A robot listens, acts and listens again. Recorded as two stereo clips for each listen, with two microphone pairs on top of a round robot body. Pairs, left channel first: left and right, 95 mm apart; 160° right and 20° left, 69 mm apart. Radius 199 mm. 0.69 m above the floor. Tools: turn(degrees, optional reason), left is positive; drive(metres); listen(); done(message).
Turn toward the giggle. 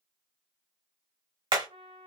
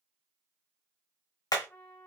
listen()
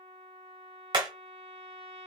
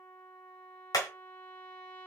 listen()
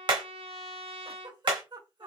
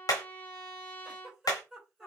turn(degrees=-60, reason="The giggle: 60° right.")
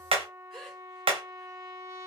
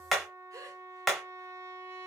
listen()
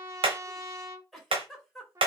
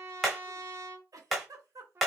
done("Found it: a giggle, straight ahead, 2 to 4 m away.")